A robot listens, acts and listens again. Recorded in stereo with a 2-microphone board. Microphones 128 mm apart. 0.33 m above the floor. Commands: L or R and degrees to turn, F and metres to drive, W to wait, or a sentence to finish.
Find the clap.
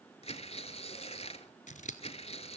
W
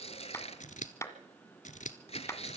L25
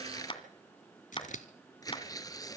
L130
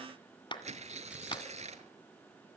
L40
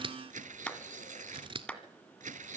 L10
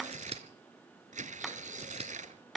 Facing the clap, 1 to 2 m away.